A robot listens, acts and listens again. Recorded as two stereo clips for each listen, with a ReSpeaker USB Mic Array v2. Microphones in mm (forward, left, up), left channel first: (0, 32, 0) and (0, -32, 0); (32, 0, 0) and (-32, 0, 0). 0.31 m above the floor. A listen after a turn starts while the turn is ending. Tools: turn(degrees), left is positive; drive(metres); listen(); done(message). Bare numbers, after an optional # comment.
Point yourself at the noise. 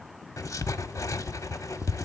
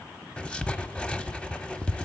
# The writing: 70° left.
turn(70)
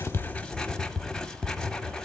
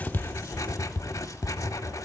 # The writing is now 10° left.
turn(10)
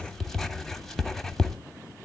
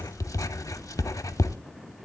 done("Found it: writing, straight ahead.")